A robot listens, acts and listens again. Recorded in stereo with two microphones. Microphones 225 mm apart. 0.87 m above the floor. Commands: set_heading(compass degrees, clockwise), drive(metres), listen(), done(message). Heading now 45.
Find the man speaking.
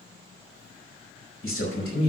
set_heading(330)
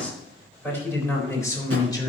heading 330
set_heading(310)
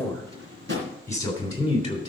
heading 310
set_heading(290)
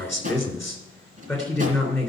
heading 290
done("Found it: a man speaking, straight ahead, 2 to 4 m away.")